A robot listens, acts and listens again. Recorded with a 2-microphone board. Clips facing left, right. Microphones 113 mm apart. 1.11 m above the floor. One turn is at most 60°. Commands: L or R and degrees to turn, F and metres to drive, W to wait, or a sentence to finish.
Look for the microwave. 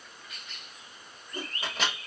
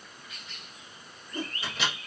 L45
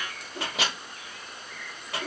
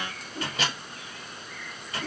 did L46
L60
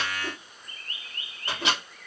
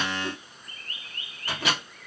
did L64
L25
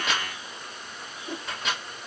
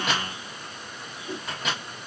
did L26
Facing the microwave.